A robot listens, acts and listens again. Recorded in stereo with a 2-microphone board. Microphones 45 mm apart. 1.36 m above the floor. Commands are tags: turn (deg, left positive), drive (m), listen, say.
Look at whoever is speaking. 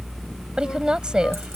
<turn deg="-15"/>
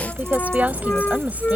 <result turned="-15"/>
<turn deg="-150"/>
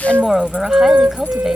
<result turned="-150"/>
<say>Facing the woman speaking.</say>